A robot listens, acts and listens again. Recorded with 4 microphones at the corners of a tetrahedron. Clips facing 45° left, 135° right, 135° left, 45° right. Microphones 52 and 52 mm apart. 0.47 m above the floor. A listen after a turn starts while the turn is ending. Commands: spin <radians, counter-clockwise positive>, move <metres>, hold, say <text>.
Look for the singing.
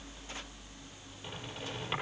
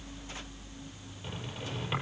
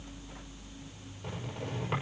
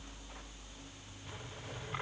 hold
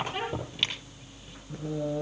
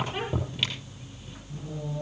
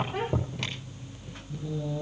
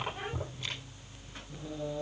spin 0.52
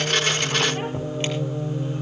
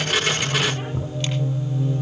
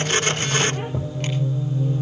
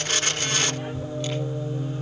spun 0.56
say Facing the singing, over 4 m away.